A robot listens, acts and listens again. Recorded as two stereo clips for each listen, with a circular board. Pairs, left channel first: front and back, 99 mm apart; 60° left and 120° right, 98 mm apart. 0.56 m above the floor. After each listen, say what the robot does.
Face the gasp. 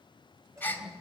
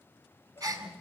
Turn 70° right.
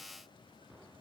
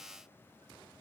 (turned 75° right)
Facing where the gasp came from. I can't hear it now.